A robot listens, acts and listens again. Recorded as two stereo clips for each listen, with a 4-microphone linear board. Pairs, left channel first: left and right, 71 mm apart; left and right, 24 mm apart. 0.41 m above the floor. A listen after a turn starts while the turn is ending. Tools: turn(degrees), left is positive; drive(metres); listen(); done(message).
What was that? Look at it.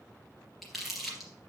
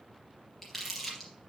turn(degrees=30)
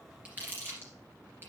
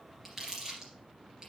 turn(degrees=-30)
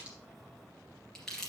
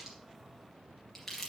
turn(degrees=10)
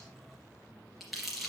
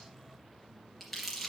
done("Facing the crumpling.")